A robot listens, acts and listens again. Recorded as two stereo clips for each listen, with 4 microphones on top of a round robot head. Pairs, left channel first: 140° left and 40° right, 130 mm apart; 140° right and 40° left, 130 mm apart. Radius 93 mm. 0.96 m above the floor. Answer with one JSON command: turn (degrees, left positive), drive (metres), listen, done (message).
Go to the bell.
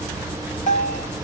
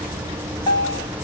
{"turn": 165}
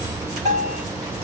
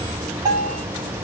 {"turn": -20}
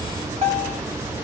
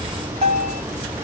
{"drive": 1.0}
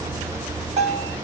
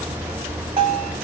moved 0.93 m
{"drive": 1.0}
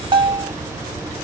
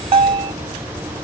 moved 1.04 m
{"drive": 1.0}
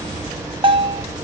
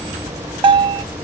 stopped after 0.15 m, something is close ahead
{"done": "Arrived at the bell, straight ahead."}